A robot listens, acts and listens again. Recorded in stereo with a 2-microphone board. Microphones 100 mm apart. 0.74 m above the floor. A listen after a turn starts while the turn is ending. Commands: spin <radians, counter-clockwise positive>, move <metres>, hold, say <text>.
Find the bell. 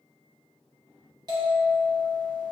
spin -0.70
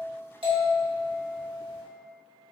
spin -1.57
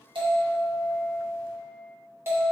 spin -0.52
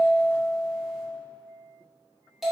say Found it: a bell, straight ahead.